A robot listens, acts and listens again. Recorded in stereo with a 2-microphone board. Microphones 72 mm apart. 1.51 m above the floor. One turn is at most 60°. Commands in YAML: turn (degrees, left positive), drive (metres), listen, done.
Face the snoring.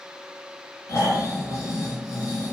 turn: 45
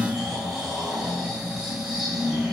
done: "Found it: snoring, straight ahead, 1 to 2 m away."